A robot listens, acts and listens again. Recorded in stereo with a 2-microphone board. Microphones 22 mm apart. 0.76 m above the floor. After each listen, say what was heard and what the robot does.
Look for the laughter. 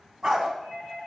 Keep listening.
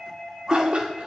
The laughter: about 60° right or 120° right. Turn 60° right.
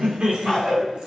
So it is at 35° right. Turn 35° right.
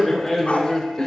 Found it: laughter, straight ahead, 2 to 4 m away.